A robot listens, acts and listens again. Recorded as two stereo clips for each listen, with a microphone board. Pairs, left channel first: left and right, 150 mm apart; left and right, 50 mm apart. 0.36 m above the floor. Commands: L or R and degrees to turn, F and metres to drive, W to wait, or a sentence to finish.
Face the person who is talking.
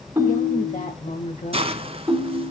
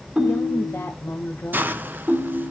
L60
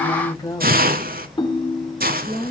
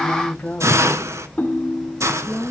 L35
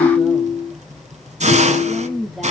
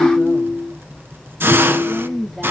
Found it: a woman speaking, straight ahead, 1 to 2 m away.